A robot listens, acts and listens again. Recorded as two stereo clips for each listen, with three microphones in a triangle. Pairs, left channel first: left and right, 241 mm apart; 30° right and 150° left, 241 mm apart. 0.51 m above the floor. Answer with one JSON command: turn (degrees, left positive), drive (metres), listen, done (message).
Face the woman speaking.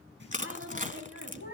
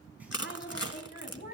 {"turn": -80}
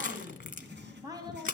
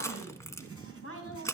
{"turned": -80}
{"turn": -20}
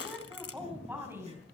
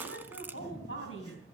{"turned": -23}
{"turn": -10}
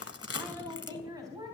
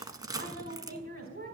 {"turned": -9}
{"turn": -15}
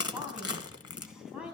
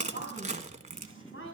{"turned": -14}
{"done": "Found it: a woman speaking, straight ahead, over 4 m away."}